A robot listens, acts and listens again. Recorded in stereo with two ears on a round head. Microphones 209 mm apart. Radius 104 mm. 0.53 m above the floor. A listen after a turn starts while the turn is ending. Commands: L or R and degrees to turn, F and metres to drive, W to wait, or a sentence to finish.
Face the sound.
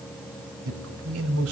R70
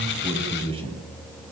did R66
R25
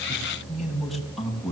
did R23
Found it: a man speaking, straight ahead.